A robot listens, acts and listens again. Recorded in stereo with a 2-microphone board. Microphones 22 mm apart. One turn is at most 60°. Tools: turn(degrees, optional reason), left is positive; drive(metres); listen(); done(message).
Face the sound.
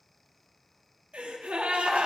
turn(degrees=-60)
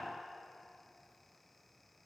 turn(degrees=-30, reason="Nothing new. It was at 30° right.")
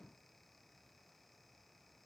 done("Facing where the gasp came from. I can't hear it now.")